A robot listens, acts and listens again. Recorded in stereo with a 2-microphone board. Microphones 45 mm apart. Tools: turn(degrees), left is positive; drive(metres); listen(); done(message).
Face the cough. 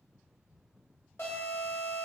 listen()
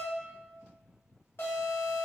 listen()
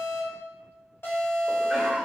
turn(degrees=-30)
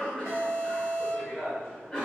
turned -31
turn(degrees=20)
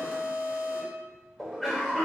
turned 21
done("Facing the cough, 1 to 2 m away.")